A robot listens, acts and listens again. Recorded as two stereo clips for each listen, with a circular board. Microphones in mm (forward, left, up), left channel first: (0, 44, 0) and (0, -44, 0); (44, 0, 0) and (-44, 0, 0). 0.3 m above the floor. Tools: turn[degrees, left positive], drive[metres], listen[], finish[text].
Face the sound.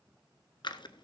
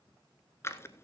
Thought: The scissors: 60° left.
Action: turn[60]
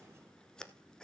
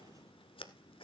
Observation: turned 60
Thought: The scissors is now 10° left.
Action: turn[10]
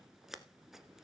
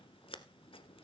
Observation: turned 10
Action: finish[Found it: scissors, straight ahead.]